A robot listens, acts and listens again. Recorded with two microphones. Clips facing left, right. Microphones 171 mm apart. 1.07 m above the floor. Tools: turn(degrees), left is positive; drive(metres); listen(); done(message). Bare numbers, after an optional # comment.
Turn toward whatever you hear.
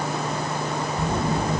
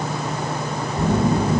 # The phone buzzing: about 35° right or 145° right.
turn(-35)
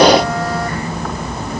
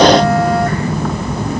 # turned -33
# So it is at 110° right.
turn(-110)
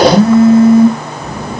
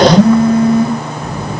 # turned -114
done("Found it: a phone buzzing, straight ahead.")